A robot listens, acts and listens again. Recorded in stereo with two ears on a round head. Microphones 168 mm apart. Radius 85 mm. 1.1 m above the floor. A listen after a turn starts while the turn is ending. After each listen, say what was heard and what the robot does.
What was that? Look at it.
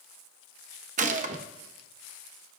The gunshot: about 40° right or 140° right. Turn 40° right.
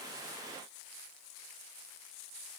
Keep listening.
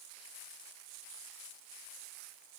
I heard a gunshot, but can't make it out now. It was about straight ahead or 100° right.